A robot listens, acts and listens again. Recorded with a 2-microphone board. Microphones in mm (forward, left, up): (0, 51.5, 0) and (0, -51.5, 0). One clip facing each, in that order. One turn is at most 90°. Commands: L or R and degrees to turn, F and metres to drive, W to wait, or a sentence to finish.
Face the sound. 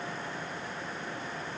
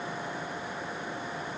W
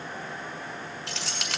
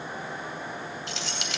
L90
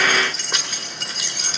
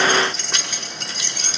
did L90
Found it: keys jangling, straight ahead, 1 to 2 m away.